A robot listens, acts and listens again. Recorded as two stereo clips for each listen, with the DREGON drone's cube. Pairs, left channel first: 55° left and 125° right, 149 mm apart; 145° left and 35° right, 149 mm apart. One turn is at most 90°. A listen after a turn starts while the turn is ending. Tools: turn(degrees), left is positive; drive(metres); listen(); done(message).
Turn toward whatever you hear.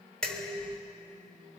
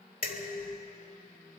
turn(degrees=90)
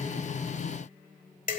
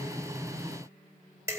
turn(degrees=35)
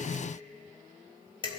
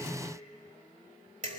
done("Found it: dishes clattering, straight ahead, 1 to 2 m away.")